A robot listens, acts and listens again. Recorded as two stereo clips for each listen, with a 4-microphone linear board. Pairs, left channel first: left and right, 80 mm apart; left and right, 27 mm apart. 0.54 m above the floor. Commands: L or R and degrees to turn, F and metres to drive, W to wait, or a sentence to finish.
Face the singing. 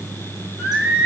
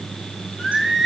R15
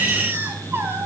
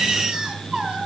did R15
R150
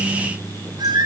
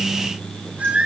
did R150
R65
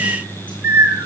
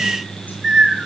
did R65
R30
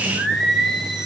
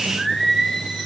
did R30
Facing the singing.